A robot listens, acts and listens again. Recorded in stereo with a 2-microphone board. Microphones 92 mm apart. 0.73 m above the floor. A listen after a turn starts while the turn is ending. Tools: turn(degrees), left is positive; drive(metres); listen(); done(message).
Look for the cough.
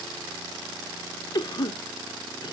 turn(degrees=50)
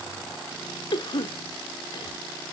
turn(degrees=70)
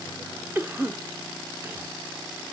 turn(degrees=-30)
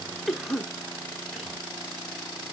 done("Facing the cough.")